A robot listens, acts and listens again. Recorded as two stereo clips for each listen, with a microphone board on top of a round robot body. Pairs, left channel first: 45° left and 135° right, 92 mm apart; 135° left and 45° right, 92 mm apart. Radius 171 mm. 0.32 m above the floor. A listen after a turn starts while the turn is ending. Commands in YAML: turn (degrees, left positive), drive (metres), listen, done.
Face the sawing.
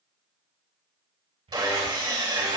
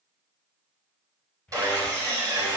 turn: -95
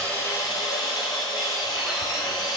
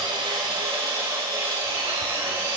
turn: 10
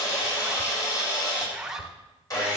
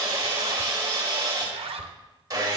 done: "Found it: sawing, straight ahead, over 4 m away."